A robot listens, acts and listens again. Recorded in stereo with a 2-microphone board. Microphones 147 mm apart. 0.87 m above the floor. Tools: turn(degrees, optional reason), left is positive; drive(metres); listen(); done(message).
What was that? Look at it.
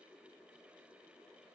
listen()
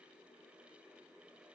listen()
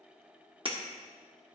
turn(degrees=-40, reason="The breaking glass: about 40° right or 140° right.")
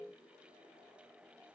listen()
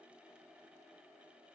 done("I heard breaking glass, but can't make it out now. It was about straight ahead or 100° right.")